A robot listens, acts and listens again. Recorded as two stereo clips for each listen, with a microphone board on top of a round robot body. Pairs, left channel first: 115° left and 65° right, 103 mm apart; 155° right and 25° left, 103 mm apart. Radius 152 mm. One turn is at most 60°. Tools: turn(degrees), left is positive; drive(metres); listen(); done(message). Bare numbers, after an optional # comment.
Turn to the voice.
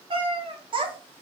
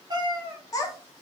# The child speaking: 100° right.
turn(-60)
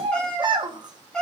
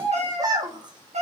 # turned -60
# The child speaking is now 25° right.
turn(-25)
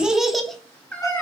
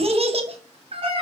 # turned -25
# The child speaking is now 35° left.
turn(35)
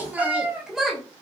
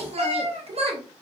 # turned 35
# The child speaking is now 20° left.
turn(20)
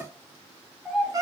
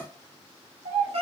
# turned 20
# The child speaking is now 25° left.
turn(25)
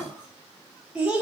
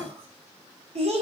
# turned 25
# The child speaking is now 15° left.
turn(15)
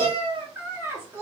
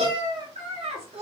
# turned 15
done("Found it: a child speaking, straight ahead, 1 to 2 m away.")